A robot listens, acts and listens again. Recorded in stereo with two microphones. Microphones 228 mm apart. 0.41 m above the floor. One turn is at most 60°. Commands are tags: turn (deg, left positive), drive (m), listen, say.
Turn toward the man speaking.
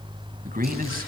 <turn deg="-40"/>
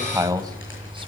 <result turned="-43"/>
<turn deg="-15"/>
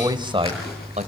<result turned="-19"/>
<turn deg="-35"/>
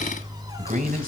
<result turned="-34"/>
<turn deg="-40"/>
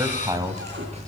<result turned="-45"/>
<turn deg="-15"/>
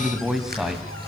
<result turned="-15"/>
<say>Facing the man speaking, 2 to 4 m away.</say>